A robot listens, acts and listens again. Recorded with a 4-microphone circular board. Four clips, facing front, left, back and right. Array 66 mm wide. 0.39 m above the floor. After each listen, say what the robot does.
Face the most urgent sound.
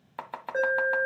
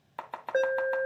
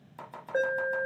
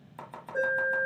Turn 90° left.
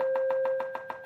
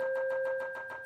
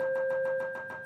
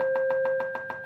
Facing the alarm, 2 to 4 m away.